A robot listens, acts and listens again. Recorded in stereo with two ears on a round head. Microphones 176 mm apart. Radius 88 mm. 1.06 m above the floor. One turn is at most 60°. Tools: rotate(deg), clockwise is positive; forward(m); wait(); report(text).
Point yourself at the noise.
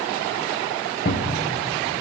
rotate(-50)
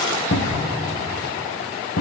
rotate(-60)
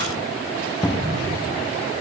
rotate(-15)
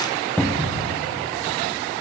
report("Facing the cupboard door, 1 to 2 m away.")